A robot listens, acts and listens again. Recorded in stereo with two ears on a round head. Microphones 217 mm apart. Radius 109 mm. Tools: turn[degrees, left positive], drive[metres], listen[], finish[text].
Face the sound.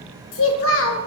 Thought: The child speaking: about 55° left or 125° left.
Action: turn[55]
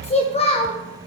Thought: So it is at 30° left.
Action: turn[30]
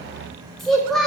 Action: finish[Facing the child speaking.]